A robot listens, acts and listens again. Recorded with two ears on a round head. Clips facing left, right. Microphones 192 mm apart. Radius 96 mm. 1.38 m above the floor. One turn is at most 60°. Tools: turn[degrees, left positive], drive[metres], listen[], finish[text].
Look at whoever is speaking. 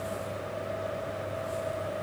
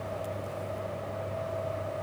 Action: listen[]
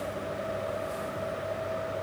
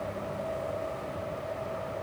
Action: listen[]
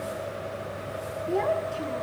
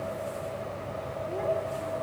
Action: turn[60]
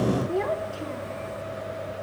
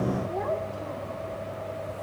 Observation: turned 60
Thought: So it is at 40° left.
Action: turn[40]
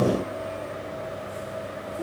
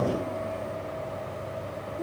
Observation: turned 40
Action: finish[Found it: a child speaking, straight ahead.]